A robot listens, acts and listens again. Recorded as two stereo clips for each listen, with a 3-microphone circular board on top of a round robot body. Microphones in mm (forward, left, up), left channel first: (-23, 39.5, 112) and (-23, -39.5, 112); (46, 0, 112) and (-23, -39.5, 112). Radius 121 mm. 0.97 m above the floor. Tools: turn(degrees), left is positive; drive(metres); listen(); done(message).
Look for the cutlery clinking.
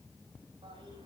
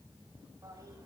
listen()
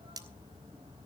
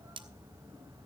turn(degrees=-135)
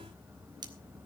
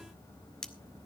turn(degrees=-55)
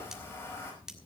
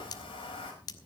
turn(degrees=-10)
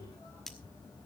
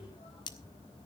done("Facing the cutlery clinking.")